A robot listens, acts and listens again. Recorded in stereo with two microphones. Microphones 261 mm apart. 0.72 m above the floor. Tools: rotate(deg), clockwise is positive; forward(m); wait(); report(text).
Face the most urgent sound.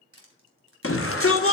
rotate(-55)
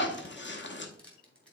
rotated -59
rotate(-50)
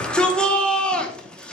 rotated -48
report("Facing the shout.")